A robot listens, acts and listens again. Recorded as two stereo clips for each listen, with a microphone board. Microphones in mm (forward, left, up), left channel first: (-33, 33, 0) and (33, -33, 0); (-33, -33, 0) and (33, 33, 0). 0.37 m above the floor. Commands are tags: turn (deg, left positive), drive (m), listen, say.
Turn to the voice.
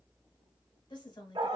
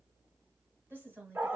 <turn deg="110"/>
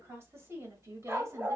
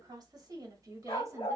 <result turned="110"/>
<say>Facing the woman speaking.</say>